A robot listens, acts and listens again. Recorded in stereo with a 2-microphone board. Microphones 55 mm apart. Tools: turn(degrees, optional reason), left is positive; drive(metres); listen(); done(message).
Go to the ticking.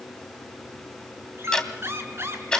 turn(degrees=30)
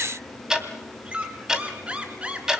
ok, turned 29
turn(degrees=-15, reason="So it is at 15° right.")
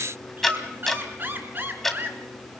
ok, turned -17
drive(metres=1.0)
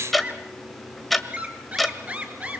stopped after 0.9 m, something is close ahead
done("Arrived at the ticking, straight ahead.")